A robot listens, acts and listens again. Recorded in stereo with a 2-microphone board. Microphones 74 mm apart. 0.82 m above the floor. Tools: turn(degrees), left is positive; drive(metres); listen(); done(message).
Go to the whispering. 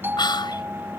turn(degrees=90)
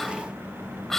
drive(metres=1.0)
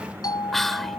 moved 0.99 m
drive(metres=1.0)
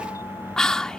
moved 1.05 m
turn(degrees=10)
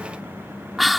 drive(metres=1.0)
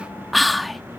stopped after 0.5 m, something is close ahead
done("Arrived at the whispering, straight ahead.")